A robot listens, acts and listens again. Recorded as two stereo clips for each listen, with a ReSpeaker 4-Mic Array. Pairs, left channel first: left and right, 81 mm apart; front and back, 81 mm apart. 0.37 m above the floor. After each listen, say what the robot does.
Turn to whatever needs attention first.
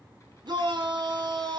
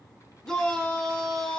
Turn 80° right.
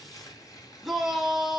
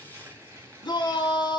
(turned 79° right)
Facing the shout, 2 to 4 m away.